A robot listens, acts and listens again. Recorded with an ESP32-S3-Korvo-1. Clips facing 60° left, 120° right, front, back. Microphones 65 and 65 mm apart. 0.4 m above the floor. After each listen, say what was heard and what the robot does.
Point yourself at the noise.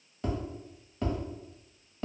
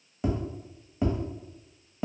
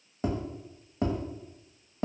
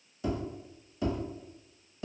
The tapping: 45° right. Turn 45° right.
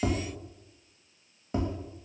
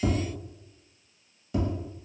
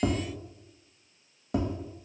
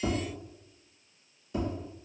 The tapping is now 10° left. Turn 10° left.
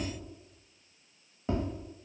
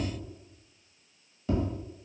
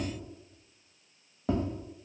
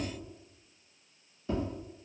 Facing the tapping.